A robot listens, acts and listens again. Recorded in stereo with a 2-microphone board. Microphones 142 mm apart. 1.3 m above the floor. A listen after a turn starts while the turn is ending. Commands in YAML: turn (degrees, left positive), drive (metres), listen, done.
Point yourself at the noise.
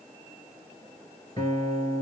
turn: 30
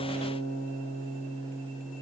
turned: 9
turn: 20
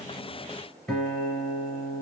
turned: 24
done: "Found it: a guitar, straight ahead, 2 to 4 m away."